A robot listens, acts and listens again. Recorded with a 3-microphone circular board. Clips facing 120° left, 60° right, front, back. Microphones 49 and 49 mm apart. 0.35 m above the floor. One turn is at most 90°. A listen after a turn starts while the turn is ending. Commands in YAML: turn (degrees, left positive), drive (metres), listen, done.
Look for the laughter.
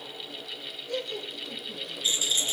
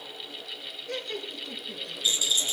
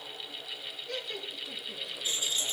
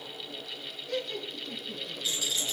turn: -85
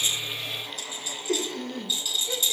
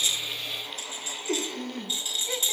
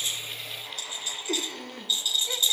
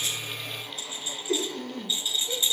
turn: -20
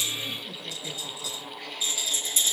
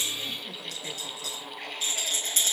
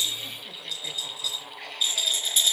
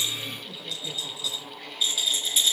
listen: true
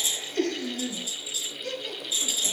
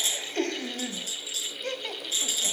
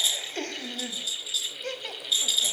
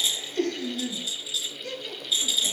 turn: -25
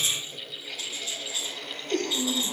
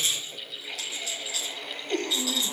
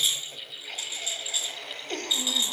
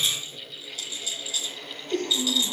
done: "Facing the laughter, 1 to 2 m away."